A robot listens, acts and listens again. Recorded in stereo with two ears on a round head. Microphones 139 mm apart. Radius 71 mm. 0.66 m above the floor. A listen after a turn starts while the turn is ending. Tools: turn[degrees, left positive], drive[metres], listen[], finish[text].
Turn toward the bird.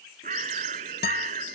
Thought: The bird: about 45° right or 135° right.
Action: turn[-45]
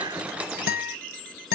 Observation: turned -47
Action: listen[]
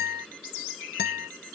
Action: listen[]
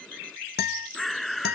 Action: finish[Facing the bird.]